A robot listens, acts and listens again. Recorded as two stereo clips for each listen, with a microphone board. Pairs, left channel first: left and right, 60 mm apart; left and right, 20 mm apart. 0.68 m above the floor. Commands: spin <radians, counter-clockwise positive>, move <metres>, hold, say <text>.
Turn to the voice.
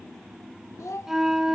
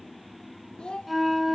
spin 1.05
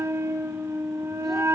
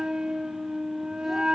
hold
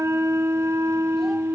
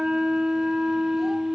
hold
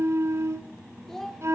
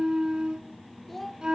say Found it: a child speaking, straight ahead, 1 to 2 m away.